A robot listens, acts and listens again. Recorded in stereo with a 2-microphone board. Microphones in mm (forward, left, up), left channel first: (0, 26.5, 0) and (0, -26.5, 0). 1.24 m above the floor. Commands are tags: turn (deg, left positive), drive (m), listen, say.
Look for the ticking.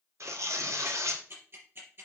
<turn deg="-45"/>
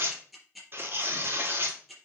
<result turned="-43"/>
<say>Found it: ticking, straight ahead, over 4 m away.</say>